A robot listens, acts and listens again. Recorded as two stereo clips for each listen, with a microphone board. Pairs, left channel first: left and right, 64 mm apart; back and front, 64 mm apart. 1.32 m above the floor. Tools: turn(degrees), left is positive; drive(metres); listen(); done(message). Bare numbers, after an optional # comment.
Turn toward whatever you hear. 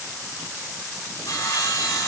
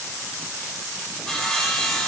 # The sawing: 105° left.
turn(105)
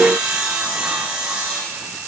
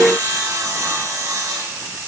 # The sawing is now 15° right.
turn(-15)
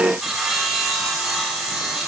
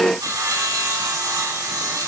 done("Facing the sawing, 2 to 4 m away.")